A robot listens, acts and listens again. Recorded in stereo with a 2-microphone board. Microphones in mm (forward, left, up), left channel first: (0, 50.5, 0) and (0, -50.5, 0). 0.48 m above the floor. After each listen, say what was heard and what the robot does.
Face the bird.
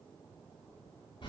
Keep listening.
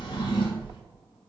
Keep listening.
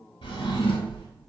I can't make out a bird, only a drawer.